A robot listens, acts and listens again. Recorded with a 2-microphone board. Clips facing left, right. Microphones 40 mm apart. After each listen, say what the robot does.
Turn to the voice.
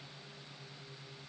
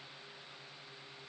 Keep listening.
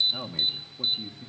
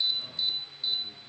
Turn 70° left.
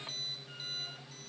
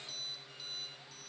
Keep listening.
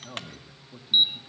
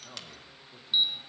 Turn 10° left.
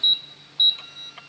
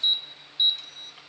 Keep listening.
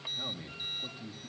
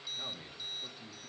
Facing the man speaking, 1 to 2 m away.